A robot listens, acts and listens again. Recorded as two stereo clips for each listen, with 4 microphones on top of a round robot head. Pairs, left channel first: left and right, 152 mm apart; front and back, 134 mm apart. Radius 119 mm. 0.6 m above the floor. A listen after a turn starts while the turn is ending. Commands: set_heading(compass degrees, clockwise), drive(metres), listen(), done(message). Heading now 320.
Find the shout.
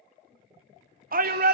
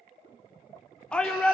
set_heading(45)
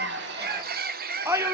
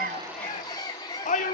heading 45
set_heading(65)
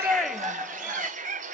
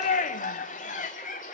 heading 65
done("Found it: a shout, straight ahead.")